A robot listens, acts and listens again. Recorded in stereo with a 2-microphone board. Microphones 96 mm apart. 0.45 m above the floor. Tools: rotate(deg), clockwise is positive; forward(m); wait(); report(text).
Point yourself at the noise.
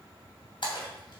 rotate(-60)
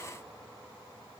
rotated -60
wait()
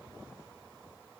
report("I heard a splash, but can't make it out now. It was about straight ahead or 60° left.")